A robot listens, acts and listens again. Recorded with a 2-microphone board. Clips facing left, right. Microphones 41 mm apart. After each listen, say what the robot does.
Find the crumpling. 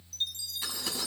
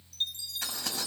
Turn 90° right.
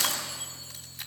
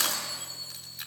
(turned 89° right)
Facing the crumpling, over 4 m away.